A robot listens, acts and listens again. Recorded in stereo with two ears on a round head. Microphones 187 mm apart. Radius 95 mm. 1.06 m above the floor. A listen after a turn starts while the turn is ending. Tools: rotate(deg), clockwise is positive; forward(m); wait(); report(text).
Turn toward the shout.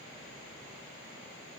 wait()
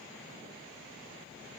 wait()
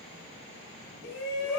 rotate(-50)
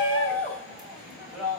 report("Facing the shout, over 4 m away.")